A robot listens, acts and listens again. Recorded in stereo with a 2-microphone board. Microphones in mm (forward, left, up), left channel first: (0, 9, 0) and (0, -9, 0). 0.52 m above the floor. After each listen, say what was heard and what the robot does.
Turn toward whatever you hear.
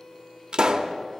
The pop: about 50° right or 130° right. Turn 50° right.
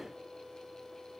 Keep listening.
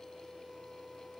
I heard a pop, but can't make it out now. It was about straight ahead or 80° right.